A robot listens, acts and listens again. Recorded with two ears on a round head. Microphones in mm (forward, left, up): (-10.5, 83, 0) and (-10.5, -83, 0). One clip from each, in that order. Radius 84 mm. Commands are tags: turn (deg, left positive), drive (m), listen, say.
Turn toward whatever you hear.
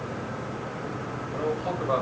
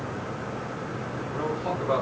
<turn deg="-20"/>
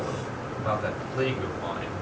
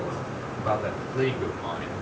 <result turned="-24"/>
<turn deg="-30"/>
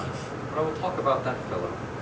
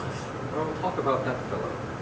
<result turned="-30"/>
<turn deg="15"/>
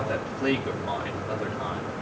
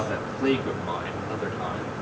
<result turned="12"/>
<say>Facing the man speaking.</say>